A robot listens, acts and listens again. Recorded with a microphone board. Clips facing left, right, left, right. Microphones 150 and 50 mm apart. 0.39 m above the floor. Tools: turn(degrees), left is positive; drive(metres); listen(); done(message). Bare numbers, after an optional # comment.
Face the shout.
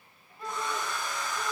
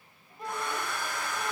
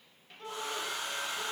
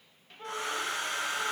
# The shout: about 20° right or 160° right.
turn(-20)
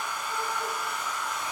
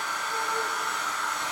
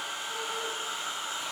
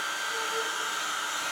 listen()
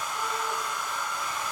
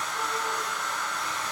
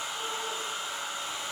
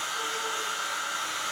listen()
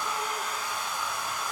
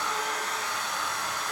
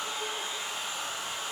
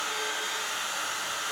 done("I heard a shout, but can't make it out now. It was about straight ahead or 140° right.")